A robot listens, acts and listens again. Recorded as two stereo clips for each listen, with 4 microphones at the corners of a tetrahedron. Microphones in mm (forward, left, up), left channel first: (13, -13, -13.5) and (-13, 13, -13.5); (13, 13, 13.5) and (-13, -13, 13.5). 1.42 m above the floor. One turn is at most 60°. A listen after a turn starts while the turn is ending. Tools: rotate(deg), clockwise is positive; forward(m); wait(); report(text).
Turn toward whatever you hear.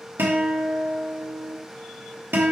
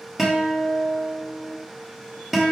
rotate(-60)
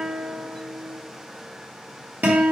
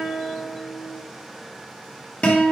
rotate(-60)
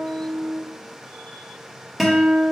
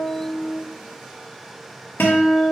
rotate(-50)
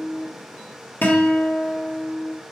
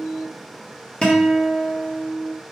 rotate(20)
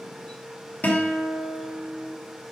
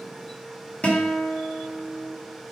report("Found it: a guitar, straight ahead.")